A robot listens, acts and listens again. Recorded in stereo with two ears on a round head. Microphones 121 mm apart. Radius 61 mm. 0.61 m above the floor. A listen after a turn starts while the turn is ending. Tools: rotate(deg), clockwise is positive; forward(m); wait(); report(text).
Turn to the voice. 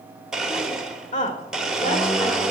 rotate(-60)
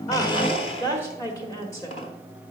rotate(-25)
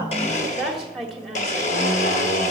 report("Found it: a woman speaking, straight ahead, 1 to 2 m away.")